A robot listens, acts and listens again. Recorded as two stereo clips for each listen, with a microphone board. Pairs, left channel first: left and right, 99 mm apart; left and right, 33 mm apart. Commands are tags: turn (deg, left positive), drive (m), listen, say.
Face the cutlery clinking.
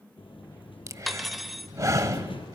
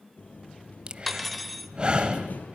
<turn deg="30"/>
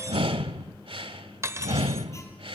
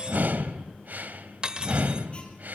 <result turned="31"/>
<turn deg="-30"/>
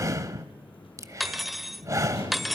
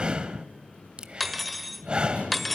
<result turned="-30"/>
<say>Facing the cutlery clinking, 1 to 2 m away.</say>